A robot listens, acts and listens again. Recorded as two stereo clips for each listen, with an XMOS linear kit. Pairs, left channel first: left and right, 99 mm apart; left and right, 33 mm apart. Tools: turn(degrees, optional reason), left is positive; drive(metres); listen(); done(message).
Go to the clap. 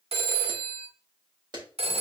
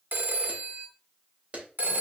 turn(degrees=-45, reason="The clap: about 45° right or 135° right.")
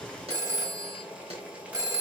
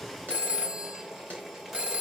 listen()
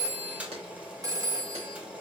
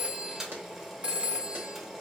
listen()
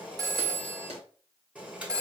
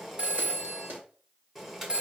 turn(degrees=-90, reason="So it is at 90° right.")
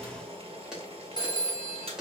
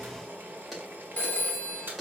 drive(metres=1.0)
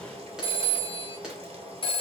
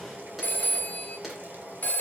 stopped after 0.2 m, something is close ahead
done("Something is in my way. I am facing the clap but have not reached it.")